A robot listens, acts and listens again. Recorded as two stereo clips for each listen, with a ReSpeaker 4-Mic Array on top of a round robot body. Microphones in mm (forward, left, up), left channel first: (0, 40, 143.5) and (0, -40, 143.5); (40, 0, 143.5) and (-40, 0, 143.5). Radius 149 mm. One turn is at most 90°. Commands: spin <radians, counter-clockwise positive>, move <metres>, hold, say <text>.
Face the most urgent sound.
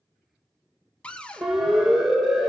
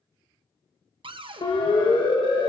say Facing the siren.